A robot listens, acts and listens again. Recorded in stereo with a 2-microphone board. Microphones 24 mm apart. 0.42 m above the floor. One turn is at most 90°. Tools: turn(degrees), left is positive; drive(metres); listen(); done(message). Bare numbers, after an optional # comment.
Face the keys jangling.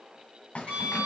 # The keys jangling: about 60° left or 120° left.
turn(60)
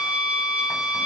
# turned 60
listen()
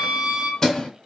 # So it is at 15° left.
turn(15)
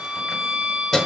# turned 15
# The keys jangling is now 10° left.
turn(10)
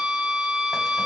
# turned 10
listen()
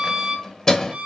# The keys jangling is now 20° left.
turn(20)
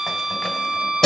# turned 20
# The keys jangling is now 15° left.
turn(15)
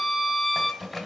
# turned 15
done("Found it: keys jangling, straight ahead.")